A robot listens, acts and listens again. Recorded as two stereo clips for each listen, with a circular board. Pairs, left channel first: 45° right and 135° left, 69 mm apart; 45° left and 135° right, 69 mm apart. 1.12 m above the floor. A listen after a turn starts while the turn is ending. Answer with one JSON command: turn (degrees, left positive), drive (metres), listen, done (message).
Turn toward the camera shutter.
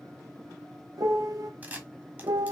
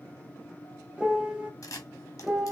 {"turn": 75}
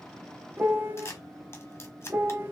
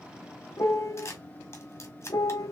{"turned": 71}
{"done": "Facing the camera shutter, 1 to 2 m away."}